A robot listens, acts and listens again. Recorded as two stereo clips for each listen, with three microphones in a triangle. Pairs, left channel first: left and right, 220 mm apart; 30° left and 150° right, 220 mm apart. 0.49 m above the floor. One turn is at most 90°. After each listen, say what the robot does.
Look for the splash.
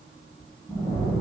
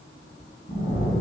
Found it: a splash, straight ahead, 1 to 2 m away.